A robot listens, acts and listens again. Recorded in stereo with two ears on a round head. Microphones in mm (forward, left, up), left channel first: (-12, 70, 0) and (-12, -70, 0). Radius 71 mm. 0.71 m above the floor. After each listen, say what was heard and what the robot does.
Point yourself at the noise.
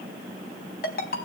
The ringtone: about 60° left or 120° left. Turn 60° left.
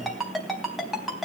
Facing the ringtone.